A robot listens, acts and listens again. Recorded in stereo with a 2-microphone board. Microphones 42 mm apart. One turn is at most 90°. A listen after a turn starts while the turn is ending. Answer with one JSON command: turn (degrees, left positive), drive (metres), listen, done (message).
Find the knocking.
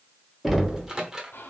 {"turn": -30}
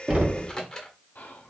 {"turn": -90}
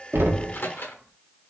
{"turn": -55}
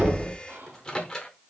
{"done": "Facing the knocking, 1 to 2 m away."}